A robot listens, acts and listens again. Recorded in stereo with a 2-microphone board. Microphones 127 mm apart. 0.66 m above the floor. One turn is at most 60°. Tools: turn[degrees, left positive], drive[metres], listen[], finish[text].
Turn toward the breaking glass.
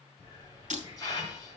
Action: turn[-60]
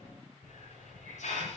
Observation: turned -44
Thought: Nothing new. It was at 45° right.
Action: turn[-45]
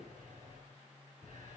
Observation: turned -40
Action: finish[I heard breaking glass from this way, but can't make it out now.]